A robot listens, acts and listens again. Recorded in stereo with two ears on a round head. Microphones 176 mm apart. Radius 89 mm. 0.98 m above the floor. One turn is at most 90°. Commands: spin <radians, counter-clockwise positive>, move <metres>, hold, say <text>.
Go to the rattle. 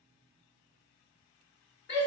hold
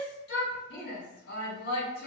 hold
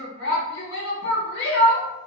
say I can't make out a rattle, only a shout.